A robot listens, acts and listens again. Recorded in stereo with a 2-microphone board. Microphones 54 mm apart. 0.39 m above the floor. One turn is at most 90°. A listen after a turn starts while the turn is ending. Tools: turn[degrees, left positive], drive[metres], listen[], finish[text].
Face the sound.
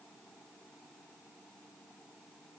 Action: listen[]
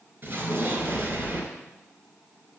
Thought: The explosion: about 40° right or 140° right.
Action: turn[-40]
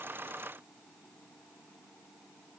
Action: listen[]
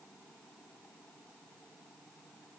Action: finish[I heard an explosion, but can't make it out now. It was about straight ahead or 100° right.]